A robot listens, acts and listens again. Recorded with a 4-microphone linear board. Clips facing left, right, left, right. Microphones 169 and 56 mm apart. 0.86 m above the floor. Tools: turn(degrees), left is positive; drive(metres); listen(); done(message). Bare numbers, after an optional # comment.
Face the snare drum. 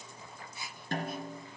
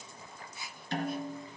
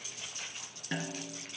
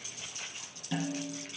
# The snare drum: about 50° left or 130° left.
turn(50)
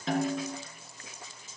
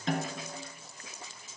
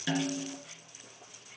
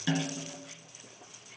done("Facing the snare drum, 2 to 4 m away.")